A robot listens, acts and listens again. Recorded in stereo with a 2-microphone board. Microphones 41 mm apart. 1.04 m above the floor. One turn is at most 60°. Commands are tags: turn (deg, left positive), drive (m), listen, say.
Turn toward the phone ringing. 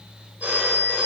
<turn deg="-45"/>
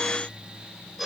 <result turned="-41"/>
<say>Facing the phone ringing.</say>